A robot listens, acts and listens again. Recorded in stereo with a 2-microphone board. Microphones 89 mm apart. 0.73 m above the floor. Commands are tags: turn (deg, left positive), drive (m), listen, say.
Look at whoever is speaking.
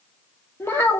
<turn deg="25"/>
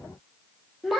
<say>Found it: a child speaking, straight ahead, under 1 m away.</say>